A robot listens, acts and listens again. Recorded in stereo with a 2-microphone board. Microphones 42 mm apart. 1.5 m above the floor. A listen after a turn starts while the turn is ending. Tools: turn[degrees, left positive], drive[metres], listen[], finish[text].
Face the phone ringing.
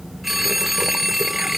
Action: turn[-30]
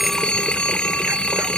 Thought: So it is at 25° left.
Action: turn[25]
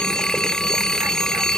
Thought: The phone ringing is now 15° left.
Action: turn[15]
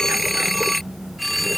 Action: finish[Found it: a phone ringing, straight ahead.]